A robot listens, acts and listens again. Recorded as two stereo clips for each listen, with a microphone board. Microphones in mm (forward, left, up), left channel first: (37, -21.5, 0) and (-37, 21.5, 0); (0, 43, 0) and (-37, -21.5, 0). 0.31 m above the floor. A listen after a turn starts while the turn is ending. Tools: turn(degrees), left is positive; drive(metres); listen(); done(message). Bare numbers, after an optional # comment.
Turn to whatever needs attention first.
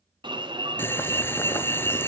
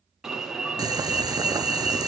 # The alarm: 155° left.
turn(155)
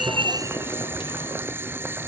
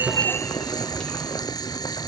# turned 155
listen()
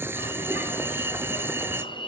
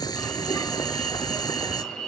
# The alarm is now 20° right.
turn(-20)
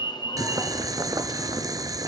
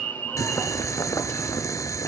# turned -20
done("Found it: an alarm, straight ahead, 2 to 4 m away.")